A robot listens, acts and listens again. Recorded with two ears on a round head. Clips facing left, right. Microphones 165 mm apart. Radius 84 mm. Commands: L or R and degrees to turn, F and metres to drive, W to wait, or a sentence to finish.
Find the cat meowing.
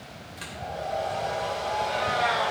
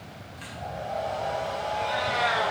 R45
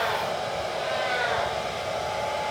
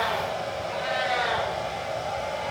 R80
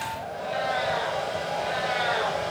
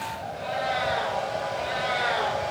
R35
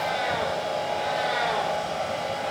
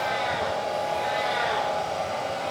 Found it: a cat meowing, straight ahead, over 4 m away.